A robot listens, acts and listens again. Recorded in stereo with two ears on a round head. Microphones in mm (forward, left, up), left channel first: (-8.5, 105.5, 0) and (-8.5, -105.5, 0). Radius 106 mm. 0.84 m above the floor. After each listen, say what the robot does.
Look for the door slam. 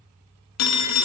Keep listening.
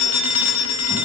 Keep listening.
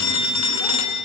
I can't make out a door slam, only a phone ringing.